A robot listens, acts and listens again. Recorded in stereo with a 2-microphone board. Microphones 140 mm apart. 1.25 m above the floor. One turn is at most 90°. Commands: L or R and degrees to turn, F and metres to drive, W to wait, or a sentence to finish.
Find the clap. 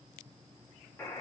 W
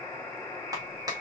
R25
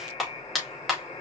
Facing the clap, 2 to 4 m away.